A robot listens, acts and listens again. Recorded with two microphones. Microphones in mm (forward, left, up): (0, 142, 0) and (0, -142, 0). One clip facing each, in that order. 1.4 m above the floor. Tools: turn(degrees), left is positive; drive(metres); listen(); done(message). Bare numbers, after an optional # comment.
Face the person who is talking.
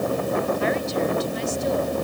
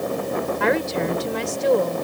turn(-90)
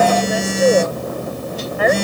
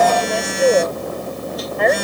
done("Facing the woman speaking.")